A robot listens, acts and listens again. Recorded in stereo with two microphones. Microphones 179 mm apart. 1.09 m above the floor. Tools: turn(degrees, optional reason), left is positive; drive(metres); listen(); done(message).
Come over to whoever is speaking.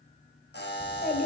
turn(degrees=60, reason="The child speaking: about 60° left or 120° left.")
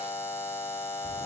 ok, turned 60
listen()
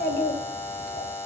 turn(degrees=65, reason="So it is at 65° left.")
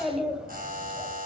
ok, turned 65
drive(metres=1.0)
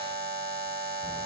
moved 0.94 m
listen()
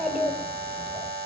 drive(metres=1.0)
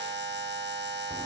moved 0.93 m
listen()
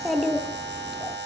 drive(metres=1.0)
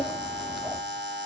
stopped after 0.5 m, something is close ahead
done("Arrived at the child speaking, straight ahead.")